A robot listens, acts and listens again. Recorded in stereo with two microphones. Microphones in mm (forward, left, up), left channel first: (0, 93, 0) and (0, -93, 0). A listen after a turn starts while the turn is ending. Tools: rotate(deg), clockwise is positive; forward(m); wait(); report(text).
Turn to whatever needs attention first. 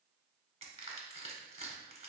wait()
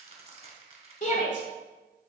rotate(-45)
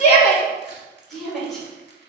report("Found it: a shout, straight ahead.")